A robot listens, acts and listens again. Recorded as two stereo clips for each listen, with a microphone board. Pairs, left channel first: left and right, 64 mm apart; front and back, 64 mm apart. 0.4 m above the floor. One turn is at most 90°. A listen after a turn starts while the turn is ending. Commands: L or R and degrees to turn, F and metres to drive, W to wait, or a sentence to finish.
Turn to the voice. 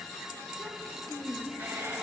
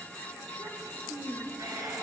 L90
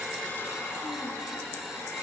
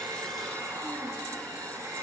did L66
L90
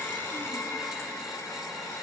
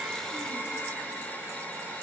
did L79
L25
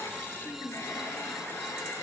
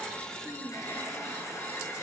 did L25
Found it: a child speaking, straight ahead, over 4 m away.